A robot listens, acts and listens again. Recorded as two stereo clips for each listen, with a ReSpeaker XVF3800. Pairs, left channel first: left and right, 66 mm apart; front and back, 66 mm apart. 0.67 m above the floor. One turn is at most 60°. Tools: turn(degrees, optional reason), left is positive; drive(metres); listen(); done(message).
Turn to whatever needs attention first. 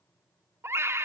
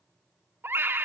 turn(degrees=-60, reason="The scream: 125° right.")
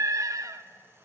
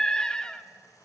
turn(degrees=-60, reason="The scream is now 75° right.")
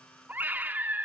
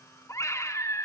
turn(degrees=-30, reason="The scream is now 30° right.")
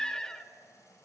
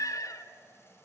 turn(degrees=10, reason="The scream is now 10° left.")
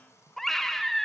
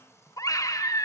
done("Found it: a scream, straight ahead, 1 to 2 m away.")